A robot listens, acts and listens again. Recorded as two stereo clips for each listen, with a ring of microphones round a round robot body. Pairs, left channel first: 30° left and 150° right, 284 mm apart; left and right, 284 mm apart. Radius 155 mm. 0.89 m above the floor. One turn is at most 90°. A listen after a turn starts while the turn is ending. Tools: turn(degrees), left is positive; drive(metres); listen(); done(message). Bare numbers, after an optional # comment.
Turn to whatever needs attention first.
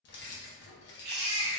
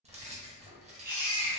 # The baby crying: 125° right.
turn(-90)
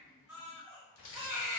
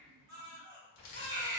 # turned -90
# The baby crying is now 40° right.
turn(-40)
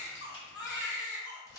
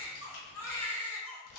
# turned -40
# The baby crying is now 10° left.
turn(10)
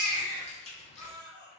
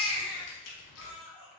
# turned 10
done("Facing the baby crying.")